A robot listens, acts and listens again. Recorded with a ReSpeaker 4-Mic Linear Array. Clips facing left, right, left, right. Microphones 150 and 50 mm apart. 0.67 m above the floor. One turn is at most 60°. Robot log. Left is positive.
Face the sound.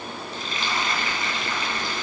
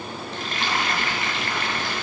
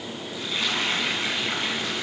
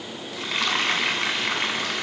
note: The frying: about 65° right or 115° right.
cmd yaw -60
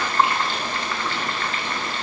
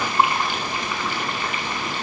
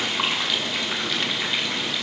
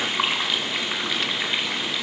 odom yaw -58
note: So it is at 15° right.
cmd yaw -15
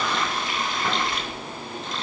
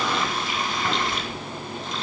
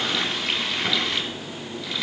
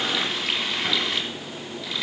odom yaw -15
end: Found it: frying, straight ahead.